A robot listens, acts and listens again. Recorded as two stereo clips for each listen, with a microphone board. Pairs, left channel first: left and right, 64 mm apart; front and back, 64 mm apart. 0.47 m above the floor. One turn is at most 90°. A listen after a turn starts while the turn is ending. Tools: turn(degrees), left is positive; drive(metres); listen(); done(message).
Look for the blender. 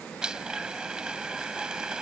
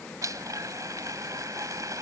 turn(degrees=-90)
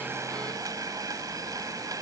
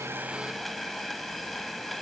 turn(degrees=-90)
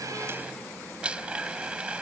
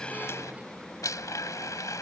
turn(degrees=-15)
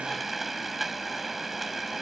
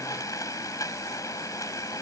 done("Facing the blender.")